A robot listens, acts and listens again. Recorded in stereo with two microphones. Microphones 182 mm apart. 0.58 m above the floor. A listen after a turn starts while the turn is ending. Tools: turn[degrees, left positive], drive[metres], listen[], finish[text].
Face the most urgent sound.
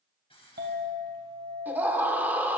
Action: turn[-30]
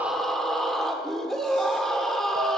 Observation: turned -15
Action: finish[Facing the scream.]